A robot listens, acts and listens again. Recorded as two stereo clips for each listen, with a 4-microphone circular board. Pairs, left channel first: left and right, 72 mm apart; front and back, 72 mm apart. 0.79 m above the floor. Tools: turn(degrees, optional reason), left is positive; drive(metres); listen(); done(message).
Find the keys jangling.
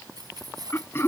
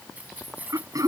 turn(degrees=-110, reason="The keys jangling: 110° right.")
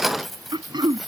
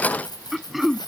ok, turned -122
done("Facing the keys jangling.")